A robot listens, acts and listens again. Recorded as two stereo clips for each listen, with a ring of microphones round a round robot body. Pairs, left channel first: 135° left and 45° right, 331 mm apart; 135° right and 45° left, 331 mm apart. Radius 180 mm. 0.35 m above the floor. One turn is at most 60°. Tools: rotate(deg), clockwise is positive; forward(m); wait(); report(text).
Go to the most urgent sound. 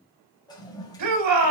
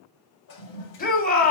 rotate(60)
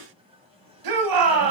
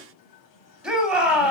rotate(45)
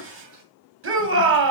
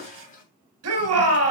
forward(1.0)
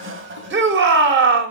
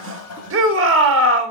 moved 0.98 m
forward(1.0)
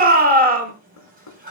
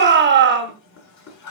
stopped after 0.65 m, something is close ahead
report("Arrived at the shout, straight ahead.")